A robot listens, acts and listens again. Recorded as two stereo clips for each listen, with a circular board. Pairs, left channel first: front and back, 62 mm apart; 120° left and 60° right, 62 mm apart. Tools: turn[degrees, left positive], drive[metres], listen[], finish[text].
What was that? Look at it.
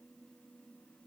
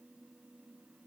Action: listen[]
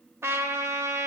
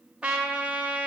Thought: The trumpet: 135° right.
Action: turn[-135]
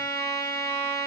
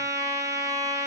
Thought: The trumpet is now 35° right.
Action: turn[-35]
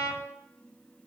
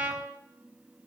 Action: finish[Facing the trumpet, 2 to 4 m away.]